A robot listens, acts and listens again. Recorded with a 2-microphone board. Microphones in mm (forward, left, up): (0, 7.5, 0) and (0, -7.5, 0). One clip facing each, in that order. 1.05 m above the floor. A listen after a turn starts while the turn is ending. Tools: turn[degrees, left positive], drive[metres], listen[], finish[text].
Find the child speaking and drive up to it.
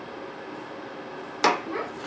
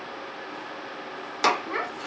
Action: turn[-90]
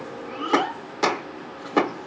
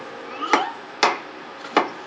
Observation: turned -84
Thought: So it is at 15° right.
Action: turn[-15]
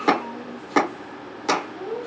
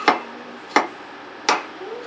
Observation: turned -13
Action: drive[1.0]
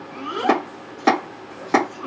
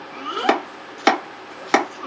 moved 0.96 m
Thought: The child speaking is now 10° right.
Action: turn[-10]
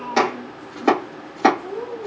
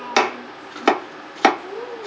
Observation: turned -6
Action: drive[1.0]
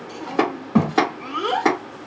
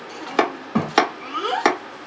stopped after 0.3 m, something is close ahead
Action: finish[Arrived at the child speaking, straight ahead.]